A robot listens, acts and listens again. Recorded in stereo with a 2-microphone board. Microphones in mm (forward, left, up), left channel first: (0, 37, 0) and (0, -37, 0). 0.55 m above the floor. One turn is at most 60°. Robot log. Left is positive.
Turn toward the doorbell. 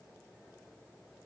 cmd idle
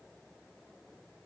cmd idle
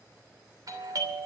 note: The doorbell: about 55° right or 125° right.
cmd yaw -55
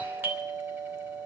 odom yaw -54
note: So it is at 30° right.
cmd yaw -30
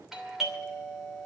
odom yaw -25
end: Facing the doorbell, 2 to 4 m away.